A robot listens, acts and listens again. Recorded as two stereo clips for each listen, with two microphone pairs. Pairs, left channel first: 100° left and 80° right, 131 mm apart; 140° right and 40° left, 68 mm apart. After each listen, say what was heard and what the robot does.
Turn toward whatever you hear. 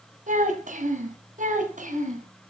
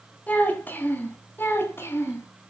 The child speaking: 90° right. Turn 90° right.
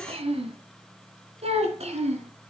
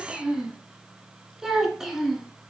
The child speaking is now 45° right. Turn 45° right.
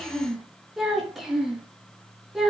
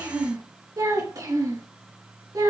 Facing the child speaking, over 4 m away.